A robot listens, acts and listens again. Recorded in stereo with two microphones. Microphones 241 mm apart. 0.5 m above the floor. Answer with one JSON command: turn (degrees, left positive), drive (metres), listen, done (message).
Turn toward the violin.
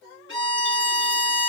{"turn": 55}
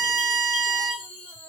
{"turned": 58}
{"done": "Found it: a violin, straight ahead, 2 to 4 m away."}